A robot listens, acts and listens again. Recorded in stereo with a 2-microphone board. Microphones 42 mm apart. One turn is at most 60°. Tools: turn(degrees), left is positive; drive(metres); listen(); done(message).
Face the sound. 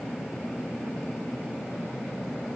listen()
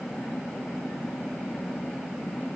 listen()
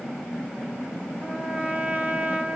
turn(degrees=-25)
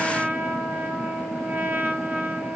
turn(degrees=-60)
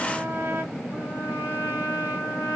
turn(degrees=-60)
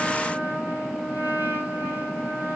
turn(degrees=-55)
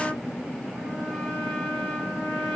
done("Facing the trumpet, 2 to 4 m away.")